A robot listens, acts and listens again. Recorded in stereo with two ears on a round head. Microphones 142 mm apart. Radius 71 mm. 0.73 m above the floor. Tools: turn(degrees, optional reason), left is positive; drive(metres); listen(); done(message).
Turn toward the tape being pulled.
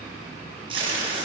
turn(degrees=-30, reason="The tape being pulled: about 30° right or 150° right.")
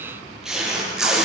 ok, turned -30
done("Facing the tape being pulled.")